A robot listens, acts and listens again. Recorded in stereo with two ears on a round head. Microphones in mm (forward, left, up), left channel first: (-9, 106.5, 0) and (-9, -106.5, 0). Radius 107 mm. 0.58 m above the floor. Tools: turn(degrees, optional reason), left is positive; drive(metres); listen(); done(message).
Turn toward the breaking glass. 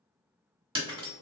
turn(degrees=-25, reason="The breaking glass: about 25° right or 155° right.")
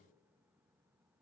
listen()
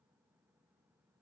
done("I heard breaking glass, but can't make it out now. It was about straight ahead or 130° right.")